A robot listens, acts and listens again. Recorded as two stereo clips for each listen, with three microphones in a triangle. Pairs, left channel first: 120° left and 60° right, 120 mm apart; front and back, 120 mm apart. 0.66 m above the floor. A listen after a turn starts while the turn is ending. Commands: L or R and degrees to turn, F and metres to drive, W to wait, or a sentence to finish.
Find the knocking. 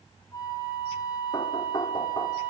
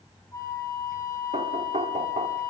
L170
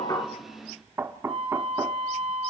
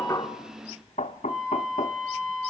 L10
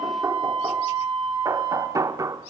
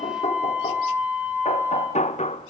Found it: knocking, straight ahead.